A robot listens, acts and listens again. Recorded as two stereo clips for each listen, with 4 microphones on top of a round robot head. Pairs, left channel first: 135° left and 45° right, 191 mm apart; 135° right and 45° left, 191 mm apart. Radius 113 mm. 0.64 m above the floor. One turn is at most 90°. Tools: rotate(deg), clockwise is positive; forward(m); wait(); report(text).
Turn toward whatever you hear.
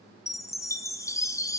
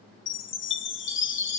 rotate(90)
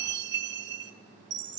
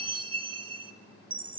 rotate(20)
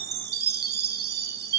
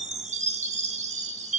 rotate(10)
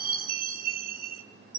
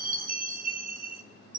report("Facing the chime.")